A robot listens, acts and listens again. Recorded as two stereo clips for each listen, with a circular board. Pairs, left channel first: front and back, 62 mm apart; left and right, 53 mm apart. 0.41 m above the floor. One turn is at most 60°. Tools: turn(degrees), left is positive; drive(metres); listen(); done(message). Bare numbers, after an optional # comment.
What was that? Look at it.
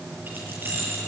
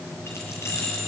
# The keys jangling: 125° left.
turn(60)
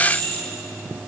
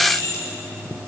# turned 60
# The keys jangling is now 60° left.
turn(60)
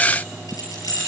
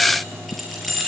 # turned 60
done("Facing the keys jangling, over 4 m away.")